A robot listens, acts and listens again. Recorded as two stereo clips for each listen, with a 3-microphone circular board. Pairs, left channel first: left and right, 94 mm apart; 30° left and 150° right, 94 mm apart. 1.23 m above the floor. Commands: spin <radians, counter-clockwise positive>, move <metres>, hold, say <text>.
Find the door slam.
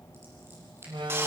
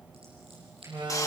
spin -2.01
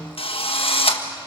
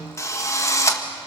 say I heard a door slam from this way, but can't make it out now.